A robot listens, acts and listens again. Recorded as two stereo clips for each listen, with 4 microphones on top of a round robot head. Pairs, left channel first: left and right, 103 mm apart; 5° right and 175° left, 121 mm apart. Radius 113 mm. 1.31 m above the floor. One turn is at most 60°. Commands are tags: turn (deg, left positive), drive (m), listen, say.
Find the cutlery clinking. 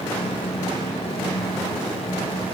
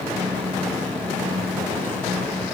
<listen/>
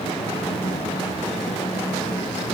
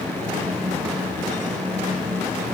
<listen/>
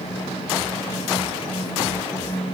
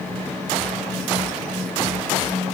<say>I can't make out cutlery clinking.</say>